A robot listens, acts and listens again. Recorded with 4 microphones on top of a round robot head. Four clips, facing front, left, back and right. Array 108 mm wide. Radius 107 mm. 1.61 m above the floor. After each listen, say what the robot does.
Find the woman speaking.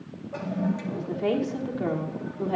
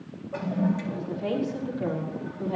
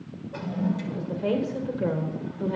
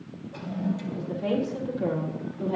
Facing the woman speaking, over 4 m away.